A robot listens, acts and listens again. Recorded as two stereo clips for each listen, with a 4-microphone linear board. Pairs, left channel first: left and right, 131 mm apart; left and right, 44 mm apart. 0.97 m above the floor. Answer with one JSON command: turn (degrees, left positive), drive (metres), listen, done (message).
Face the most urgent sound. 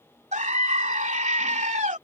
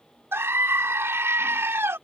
{"turn": -70}
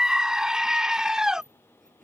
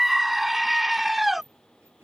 {"done": "Found it: a scream, straight ahead."}